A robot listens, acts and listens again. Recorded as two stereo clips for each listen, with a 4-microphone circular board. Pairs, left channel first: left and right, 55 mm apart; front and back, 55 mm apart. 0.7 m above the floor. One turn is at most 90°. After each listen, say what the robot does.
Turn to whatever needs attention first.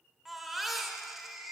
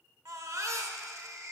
Turn 90° right.
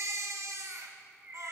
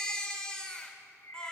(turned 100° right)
Turn 75° right.
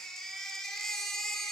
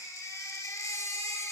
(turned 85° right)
Turn 10° left.
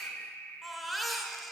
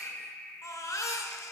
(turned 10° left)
Facing the baby crying.